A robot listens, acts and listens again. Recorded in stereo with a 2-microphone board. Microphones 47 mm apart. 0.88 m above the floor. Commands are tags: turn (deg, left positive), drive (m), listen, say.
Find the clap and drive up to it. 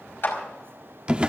<turn deg="50"/>
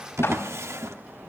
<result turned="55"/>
<listen/>
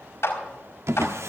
<turn deg="75"/>
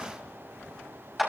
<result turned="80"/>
<drive m="1.0"/>
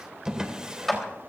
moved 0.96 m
<drive m="1.0"/>
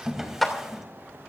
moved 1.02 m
<drive m="1.0"/>
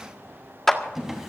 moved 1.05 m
<drive m="1.0"/>
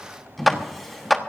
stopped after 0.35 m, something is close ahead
<say>Arrived at the clap, straight ahead.</say>